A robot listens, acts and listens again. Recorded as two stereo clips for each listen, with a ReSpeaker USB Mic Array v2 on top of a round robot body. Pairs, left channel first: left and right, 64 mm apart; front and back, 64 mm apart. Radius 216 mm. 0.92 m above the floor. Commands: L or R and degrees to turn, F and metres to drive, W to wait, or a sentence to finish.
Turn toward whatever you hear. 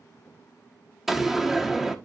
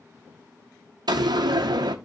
R175
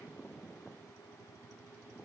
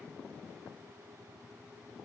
I heard a door slam from this way, but can't make it out now.